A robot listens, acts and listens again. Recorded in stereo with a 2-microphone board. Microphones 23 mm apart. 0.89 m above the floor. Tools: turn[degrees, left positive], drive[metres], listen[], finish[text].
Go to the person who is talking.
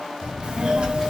Thought: The child speaking: about 50° right or 130° right.
Action: turn[-50]
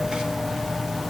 Thought: So it is at 85° right.
Action: turn[-85]
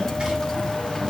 Action: listen[]
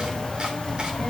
Thought: The child speaking is now 10° left.
Action: turn[10]
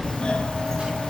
Action: drive[1.0]
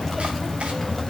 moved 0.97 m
Action: drive[1.0]
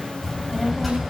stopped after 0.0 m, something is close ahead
Action: finish[Something is in my way. I am facing the child speaking but have not reached it.]